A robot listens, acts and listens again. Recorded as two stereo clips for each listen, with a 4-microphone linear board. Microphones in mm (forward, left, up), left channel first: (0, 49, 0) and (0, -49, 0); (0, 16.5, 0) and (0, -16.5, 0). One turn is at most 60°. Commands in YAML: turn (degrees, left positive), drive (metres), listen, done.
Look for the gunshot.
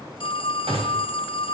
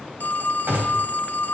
turn: -60
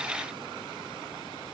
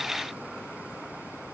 listen: true
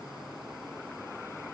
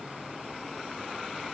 done: "I heard a gunshot, but can't make it out now. It was about 15° right or 45° right."